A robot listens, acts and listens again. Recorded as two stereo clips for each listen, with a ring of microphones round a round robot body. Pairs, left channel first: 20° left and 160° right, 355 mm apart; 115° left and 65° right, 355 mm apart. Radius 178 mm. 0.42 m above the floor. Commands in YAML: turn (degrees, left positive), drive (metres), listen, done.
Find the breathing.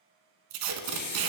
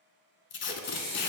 turn: 85
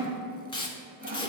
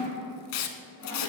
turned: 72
turn: 10
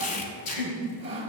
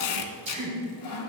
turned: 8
done: "Found it: breathing, straight ahead."